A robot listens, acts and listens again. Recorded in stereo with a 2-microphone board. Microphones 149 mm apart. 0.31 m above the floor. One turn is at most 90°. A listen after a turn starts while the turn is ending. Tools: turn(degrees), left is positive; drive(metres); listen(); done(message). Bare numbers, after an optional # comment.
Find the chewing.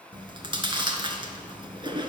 # The chewing: about 35° right or 145° right.
turn(-35)
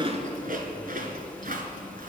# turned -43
# So it is at 100° right.
turn(-90)
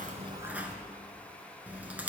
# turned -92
# The chewing is now 10° right.
turn(-10)
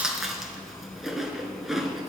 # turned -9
done("Facing the chewing, 1 to 2 m away.")